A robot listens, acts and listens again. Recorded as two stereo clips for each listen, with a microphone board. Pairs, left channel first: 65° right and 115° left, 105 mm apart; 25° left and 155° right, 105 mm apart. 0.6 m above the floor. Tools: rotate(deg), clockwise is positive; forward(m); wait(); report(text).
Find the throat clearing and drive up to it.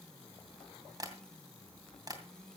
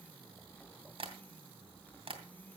wait()
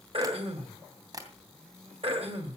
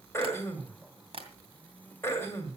rotate(-85)
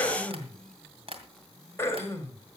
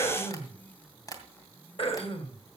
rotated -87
forward(1.0)
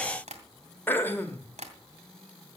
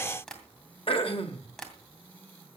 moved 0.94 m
forward(1.0)
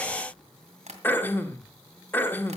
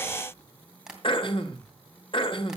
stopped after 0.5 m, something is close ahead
report("Arrived at the throat clearing, straight ahead.")